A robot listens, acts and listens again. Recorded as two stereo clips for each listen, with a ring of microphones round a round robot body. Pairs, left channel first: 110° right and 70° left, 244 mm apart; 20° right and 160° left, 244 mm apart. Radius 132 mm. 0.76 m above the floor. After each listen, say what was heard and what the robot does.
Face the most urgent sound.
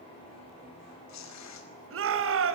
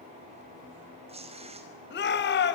The shout: 30° left. Turn 30° left.
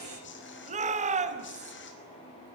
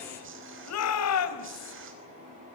Facing the shout.